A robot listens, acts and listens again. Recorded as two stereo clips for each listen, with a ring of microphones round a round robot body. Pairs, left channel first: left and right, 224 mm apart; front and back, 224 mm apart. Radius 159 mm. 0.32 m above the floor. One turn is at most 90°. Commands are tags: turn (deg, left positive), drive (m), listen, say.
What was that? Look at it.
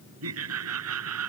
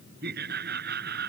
<turn deg="-90"/>
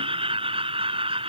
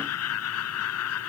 <turn deg="-25"/>
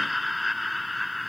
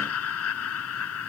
<say>Found it: laughter, straight ahead.</say>